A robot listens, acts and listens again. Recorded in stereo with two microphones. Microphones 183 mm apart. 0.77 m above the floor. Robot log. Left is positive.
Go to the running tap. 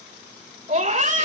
cmd idle
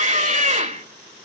cmd idle
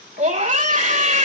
end: I can't make out a running tap, only a scream.